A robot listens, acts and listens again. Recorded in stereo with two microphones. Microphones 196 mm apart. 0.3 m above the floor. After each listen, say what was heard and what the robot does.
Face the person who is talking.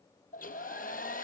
Keep listening.
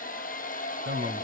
The man speaking: about 55° right or 125° right. Turn 55° right.
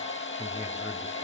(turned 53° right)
So it is at 15° right. Turn 15° right.
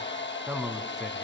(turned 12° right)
Found it: a man speaking, straight ahead, 2 to 4 m away.